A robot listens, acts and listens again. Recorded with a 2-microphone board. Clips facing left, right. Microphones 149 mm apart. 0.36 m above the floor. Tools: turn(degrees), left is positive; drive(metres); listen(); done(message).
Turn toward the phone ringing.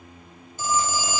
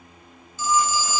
turn(degrees=50)
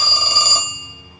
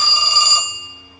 turn(degrees=65)
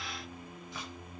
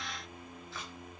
listen()
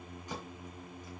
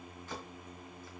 listen()
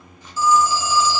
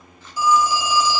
turn(degrees=-20)
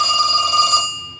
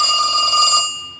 done("Facing the phone ringing.")